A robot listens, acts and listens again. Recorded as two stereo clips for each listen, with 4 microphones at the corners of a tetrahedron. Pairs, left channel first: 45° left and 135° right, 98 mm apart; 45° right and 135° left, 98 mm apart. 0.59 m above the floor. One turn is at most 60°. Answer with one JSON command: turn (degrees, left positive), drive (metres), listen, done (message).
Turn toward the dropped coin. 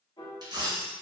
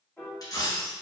{"turn": -60}
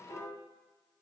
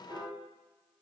{"turn": -35}
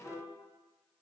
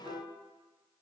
{"done": "Facing where the dropped coin came from. I can't hear it now."}